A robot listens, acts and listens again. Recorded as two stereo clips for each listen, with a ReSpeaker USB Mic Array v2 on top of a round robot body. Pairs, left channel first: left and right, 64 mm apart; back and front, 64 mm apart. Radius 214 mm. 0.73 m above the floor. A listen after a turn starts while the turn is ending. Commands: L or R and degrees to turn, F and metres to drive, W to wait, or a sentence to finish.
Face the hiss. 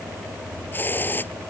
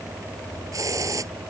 L30
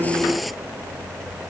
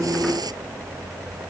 W
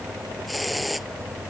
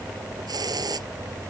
Facing the hiss.